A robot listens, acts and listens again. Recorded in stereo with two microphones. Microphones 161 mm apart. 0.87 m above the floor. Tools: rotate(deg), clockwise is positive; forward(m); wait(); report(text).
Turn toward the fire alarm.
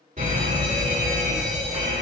rotate(50)
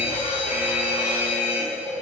report("Found it: a fire alarm, straight ahead.")